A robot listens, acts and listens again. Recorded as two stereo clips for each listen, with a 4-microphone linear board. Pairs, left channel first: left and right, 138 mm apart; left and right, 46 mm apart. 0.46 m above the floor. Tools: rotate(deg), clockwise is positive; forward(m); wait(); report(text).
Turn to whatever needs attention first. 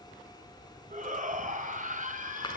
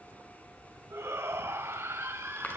rotate(70)
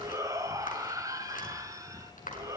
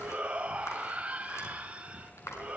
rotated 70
rotate(25)
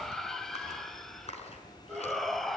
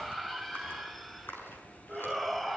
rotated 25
report("Facing the shout.")